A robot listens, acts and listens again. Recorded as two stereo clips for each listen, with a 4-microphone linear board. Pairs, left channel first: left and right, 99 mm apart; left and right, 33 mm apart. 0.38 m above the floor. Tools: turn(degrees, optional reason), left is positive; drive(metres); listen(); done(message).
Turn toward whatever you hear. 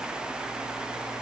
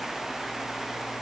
listen()
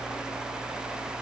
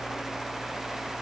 listen()
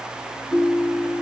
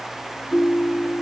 turn(degrees=-30)
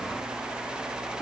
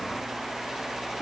listen()
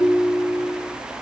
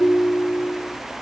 turn(degrees=30, reason="So it is at 30° left.")
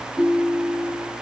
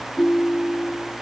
done("Facing the ringtone.")